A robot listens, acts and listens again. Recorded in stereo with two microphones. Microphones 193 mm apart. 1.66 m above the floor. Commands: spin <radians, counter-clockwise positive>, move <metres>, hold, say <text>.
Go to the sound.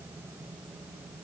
hold
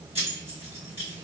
spin -0.52
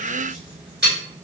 spin -2.01
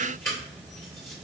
spin 0.26
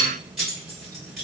move 1.0
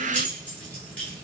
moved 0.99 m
hold
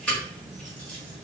spin 0.17
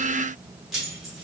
move 1.0
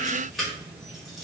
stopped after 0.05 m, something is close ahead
say I am next to the keys jangling.